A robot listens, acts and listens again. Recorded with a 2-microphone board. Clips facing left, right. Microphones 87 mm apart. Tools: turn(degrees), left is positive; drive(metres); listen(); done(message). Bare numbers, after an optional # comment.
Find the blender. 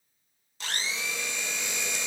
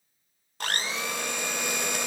# The blender: about 55° right or 125° right.
turn(-55)
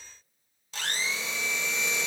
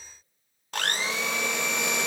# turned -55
# So it is at 65° right.
turn(-65)
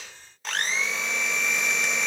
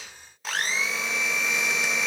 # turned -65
done("Facing the blender, under 1 m away.")